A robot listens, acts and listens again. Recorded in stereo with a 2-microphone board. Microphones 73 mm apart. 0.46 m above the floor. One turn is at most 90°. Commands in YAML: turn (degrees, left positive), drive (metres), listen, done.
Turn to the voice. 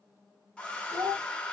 turn: -60
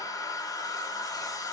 listen: true
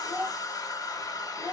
turn: -20
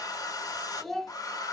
done: "Facing the child speaking."